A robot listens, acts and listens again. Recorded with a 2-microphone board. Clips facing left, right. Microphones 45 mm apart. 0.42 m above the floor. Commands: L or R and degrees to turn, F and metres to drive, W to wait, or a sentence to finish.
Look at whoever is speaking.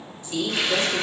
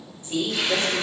R35
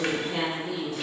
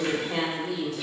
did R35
R105
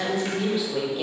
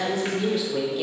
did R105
L10
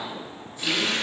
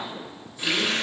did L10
W
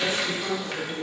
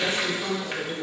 Found it: a woman speaking, straight ahead.